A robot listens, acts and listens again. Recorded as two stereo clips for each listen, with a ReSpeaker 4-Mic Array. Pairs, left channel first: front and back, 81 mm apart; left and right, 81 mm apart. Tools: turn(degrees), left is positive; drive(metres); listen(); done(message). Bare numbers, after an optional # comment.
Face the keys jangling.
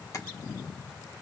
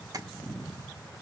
listen()
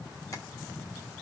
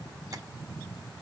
listen()
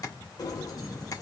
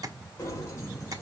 # The keys jangling: 40° left.
turn(40)
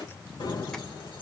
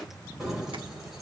done("Found it: keys jangling, straight ahead.")